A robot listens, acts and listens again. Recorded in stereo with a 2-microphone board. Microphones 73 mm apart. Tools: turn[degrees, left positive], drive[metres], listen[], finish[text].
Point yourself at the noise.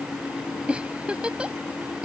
Thought: The giggle: about 15° right or 165° right.
Action: turn[-15]
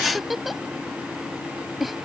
Action: finish[Found it: a giggle, straight ahead.]